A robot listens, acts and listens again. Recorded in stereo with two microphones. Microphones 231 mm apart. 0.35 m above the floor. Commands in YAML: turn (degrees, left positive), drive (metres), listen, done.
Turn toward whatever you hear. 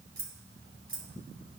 turn: -60
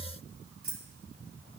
turn: -50
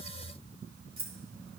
turn: -30
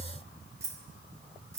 turn: -15
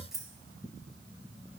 done: "Found it: keys jangling, straight ahead."